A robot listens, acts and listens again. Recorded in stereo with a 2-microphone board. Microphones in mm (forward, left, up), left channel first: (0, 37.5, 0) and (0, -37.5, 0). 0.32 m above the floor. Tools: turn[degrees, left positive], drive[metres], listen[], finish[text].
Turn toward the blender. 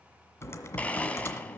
Thought: The blender: about 15° left or 165° left.
Action: turn[15]
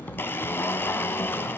Thought: So it is at 150° left.
Action: turn[150]
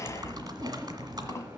Action: listen[]
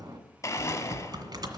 Thought: The blender is now 45° left.
Action: turn[45]
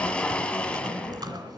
Thought: The blender is now 15° left.
Action: turn[15]
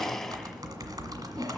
Action: finish[Facing the blender.]